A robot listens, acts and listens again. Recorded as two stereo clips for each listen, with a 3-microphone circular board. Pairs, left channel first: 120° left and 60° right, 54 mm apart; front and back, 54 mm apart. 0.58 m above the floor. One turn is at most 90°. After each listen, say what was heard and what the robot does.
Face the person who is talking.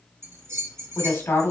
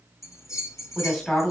The woman speaking: 80° left. Turn 80° left.
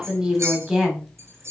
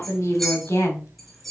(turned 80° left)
The woman speaking is now 15° left. Turn 15° left.
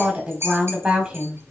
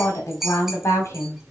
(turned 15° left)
Found it: a woman speaking, straight ahead, 1 to 2 m away.